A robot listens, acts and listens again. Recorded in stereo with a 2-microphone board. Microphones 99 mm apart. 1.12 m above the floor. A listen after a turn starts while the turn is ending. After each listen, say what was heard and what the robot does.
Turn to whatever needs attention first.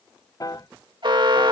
The alarm: about 55° right or 125° right. Turn 55° right.
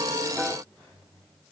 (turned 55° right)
Keep listening.
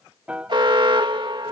So it is at 65° right. Turn 65° right.
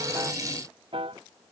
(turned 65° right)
Keep listening.
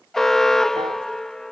Found it: an alarm, straight ahead.